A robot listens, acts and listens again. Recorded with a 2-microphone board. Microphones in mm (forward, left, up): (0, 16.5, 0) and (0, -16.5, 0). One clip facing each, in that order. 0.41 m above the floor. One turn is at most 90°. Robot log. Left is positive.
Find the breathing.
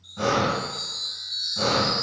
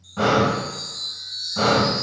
note: The breathing: about 40° right or 140° right.
cmd yaw -40
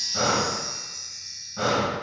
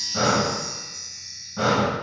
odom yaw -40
end: Found it: breathing, straight ahead.